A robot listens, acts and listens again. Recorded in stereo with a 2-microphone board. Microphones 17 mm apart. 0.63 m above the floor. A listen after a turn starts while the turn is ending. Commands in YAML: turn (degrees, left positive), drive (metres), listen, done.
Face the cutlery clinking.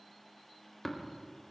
listen: true
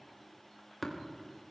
listen: true
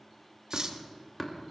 turn: -50
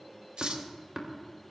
listen: true
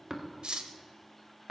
turn: -80
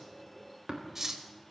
turn: -25
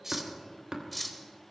done: "Found it: cutlery clinking, straight ahead, 1 to 2 m away."